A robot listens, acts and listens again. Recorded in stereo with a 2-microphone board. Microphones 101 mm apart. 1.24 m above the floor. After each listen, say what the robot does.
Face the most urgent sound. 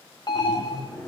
Turn 45° left.
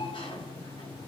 Turn 90° left.
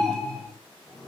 Found it: an alarm, straight ahead.